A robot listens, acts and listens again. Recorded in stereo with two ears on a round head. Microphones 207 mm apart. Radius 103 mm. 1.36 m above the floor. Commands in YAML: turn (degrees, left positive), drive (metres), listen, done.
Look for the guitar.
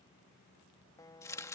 turn: 15
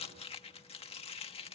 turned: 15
listen: true
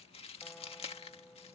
listen: true
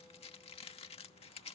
done: "I heard a guitar, but can't make it out now. It was about straight ahead or 150° left."